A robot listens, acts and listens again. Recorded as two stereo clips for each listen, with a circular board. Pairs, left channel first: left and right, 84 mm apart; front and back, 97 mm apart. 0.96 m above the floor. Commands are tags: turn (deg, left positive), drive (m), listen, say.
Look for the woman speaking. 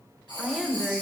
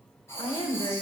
<turn deg="10"/>
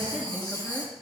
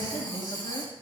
<turn deg="10"/>
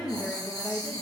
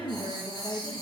<turn deg="20"/>
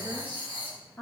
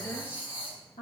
<turn deg="15"/>
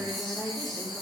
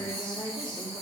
<say>Found it: a woman speaking, straight ahead.</say>